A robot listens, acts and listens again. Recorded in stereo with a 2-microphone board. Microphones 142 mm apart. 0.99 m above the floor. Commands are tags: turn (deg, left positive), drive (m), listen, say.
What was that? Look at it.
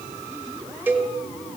<turn deg="-30"/>
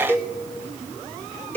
<turn deg="15"/>
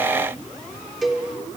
<say>Found it: a cowbell, straight ahead.</say>